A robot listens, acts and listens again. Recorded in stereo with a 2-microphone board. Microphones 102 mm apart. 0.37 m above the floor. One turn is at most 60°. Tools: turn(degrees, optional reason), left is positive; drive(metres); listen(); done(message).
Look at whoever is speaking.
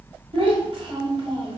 turn(degrees=-60, reason="The child speaking: about 65° right or 115° right.")
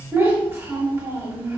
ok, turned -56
turn(degrees=-30, reason="So it is at 30° right.")
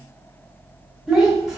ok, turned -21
turn(degrees=-10, reason="The child speaking is now 10° right.")
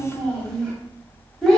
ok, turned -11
done("Facing the child speaking, 1 to 2 m away.")